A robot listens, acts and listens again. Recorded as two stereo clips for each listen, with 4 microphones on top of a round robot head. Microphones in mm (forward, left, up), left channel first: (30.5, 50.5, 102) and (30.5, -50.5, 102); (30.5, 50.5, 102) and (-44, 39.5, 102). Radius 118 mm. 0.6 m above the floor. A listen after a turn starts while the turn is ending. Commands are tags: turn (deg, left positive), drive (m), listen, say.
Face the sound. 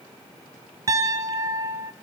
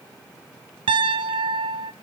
<turn deg="-155"/>
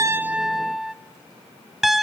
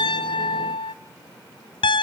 <say>Found it: a piano, straight ahead, under 1 m away.</say>